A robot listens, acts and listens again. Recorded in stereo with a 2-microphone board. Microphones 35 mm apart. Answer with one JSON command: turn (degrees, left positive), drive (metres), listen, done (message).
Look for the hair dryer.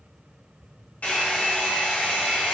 {"turn": 55}
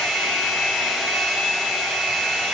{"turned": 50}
{"done": "Facing the hair dryer."}